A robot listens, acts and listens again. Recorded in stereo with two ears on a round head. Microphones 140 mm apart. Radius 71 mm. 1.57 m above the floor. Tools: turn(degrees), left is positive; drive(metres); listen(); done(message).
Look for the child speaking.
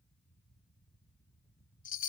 listen()
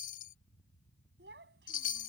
turn(degrees=-70)
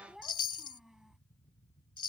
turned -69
done("Facing the child speaking.")